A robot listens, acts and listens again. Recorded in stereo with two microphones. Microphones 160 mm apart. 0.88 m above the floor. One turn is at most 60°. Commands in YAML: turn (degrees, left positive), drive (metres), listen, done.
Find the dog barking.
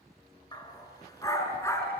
turn: 20
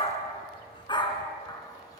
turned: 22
turn: 25
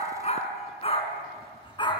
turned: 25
turn: 30
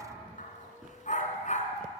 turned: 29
turn: 60
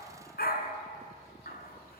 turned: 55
turn: 60
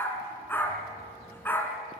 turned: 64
turn: 10
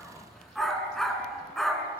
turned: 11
done: "Found it: a dog barking, straight ahead."